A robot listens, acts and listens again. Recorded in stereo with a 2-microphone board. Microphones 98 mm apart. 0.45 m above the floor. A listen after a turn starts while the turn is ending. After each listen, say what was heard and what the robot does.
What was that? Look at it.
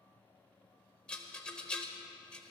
Turn 30° left.
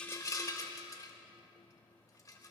So it is at 135° left. Turn 135° left.
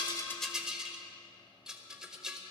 The rattle is now 10° right. Turn 10° right.
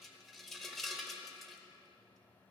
Facing the rattle.